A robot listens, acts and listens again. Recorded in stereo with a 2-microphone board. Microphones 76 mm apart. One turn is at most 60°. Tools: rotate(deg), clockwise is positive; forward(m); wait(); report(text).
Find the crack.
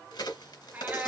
rotate(-60)
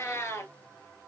rotate(-30)
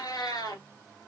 report("I heard a crack from this way, but can't make it out now.")